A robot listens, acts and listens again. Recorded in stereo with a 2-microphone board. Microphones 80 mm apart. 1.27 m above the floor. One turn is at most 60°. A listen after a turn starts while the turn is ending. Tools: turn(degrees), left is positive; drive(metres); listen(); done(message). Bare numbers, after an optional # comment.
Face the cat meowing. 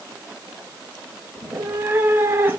# The cat meowing: about 25° right or 155° right.
turn(-25)
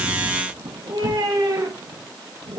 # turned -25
# So it is at 120° right.
turn(-60)
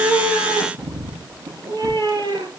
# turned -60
# The cat meowing is now 55° right.
turn(-55)
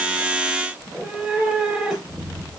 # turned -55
done("Found it: a cat meowing, straight ahead, over 4 m away.")